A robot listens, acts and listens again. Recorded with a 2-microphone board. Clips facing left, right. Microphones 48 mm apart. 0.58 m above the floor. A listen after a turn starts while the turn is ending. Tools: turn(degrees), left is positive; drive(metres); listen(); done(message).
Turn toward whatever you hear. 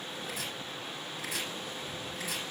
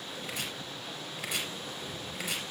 turn(degrees=-90)
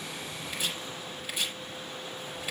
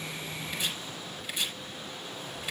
turn(degrees=10)
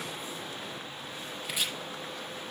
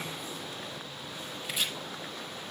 done("Found it: chopping, straight ahead, over 4 m away.")